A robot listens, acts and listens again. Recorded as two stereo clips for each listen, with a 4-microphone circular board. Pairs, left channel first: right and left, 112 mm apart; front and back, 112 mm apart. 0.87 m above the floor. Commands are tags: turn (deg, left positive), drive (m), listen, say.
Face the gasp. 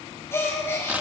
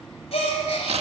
<turn deg="-25"/>
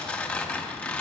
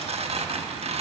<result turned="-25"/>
<say>I heard a gasp from this way, but can't make it out now.</say>